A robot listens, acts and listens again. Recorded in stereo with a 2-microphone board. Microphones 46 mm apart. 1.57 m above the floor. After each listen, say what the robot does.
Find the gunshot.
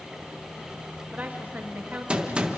Turn 25° right.
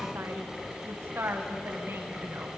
Keep listening.
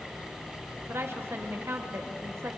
I heard a gunshot, but can't make it out now. It was about straight ahead or 130° right.